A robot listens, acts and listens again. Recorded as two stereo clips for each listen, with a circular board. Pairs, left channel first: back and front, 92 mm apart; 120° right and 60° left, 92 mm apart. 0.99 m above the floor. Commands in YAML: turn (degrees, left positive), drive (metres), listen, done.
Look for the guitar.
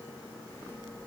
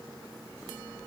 listen: true
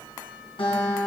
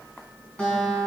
turn: 165
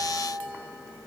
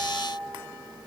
turn: 20
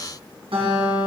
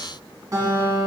turn: 10
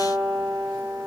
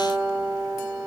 done: "Found it: a guitar, straight ahead."